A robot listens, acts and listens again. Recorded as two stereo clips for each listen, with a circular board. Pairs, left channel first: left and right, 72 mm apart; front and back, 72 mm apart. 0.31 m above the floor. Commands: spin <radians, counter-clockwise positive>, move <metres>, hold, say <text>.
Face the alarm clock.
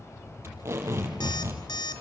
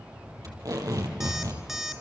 spin 1.66
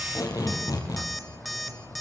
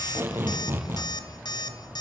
say Facing the alarm clock, 2 to 4 m away.